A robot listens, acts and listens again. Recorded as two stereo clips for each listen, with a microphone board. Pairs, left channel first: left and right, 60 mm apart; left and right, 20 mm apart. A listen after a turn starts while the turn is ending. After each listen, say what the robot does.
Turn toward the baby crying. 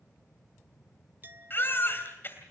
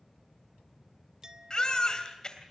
Turn 40° left.
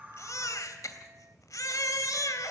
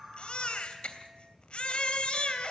Turn 95° left.
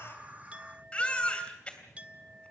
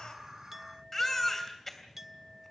Turn 20° left.
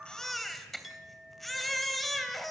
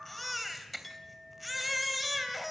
Facing the baby crying.